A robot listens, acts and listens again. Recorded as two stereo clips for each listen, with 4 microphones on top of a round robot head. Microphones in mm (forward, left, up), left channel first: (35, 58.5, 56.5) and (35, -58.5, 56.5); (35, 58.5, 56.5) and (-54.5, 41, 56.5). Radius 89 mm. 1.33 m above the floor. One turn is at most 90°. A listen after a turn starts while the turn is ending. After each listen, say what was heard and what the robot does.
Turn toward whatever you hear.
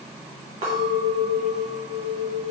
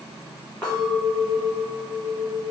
The clink: 70° right. Turn 70° right.
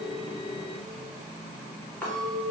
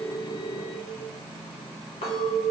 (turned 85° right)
The clink is now 15° left. Turn 15° left.
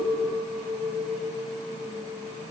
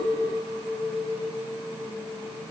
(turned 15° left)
Found it: a clink, straight ahead, 1 to 2 m away.